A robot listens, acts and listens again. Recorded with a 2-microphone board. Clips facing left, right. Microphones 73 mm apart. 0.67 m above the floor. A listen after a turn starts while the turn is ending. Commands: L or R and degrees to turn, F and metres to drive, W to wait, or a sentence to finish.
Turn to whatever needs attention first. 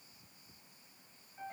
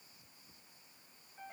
W
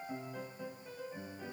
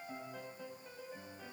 W
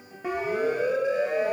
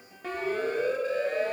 L30
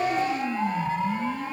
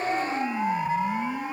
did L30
R15
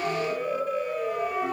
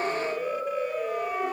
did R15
Facing the siren, 2 to 4 m away.